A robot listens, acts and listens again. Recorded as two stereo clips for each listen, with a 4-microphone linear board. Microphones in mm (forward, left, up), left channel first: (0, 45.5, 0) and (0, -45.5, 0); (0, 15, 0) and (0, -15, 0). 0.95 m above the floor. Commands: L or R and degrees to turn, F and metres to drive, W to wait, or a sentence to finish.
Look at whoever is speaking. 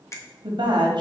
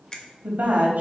R65
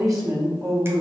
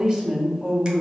R40
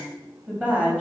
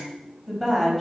R15
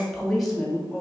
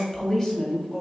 Facing the woman speaking, 2 to 4 m away.